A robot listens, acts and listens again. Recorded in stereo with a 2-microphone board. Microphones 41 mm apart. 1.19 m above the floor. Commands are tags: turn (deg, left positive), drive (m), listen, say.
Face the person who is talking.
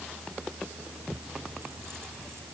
<listen/>
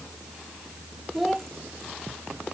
<turn deg="30"/>
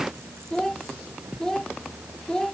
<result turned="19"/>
<turn deg="160"/>
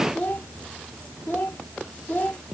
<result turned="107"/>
<turn deg="55"/>
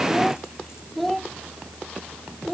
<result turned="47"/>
<say>Facing the child speaking.</say>